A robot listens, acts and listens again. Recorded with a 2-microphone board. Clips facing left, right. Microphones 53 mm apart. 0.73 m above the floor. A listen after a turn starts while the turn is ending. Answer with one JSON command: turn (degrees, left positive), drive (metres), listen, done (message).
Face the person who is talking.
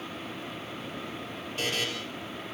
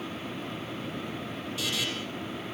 {"listen": true}
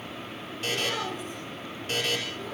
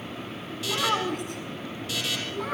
{"turn": -70}
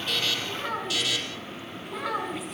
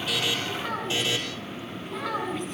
{"done": "Found it: a child speaking, straight ahead."}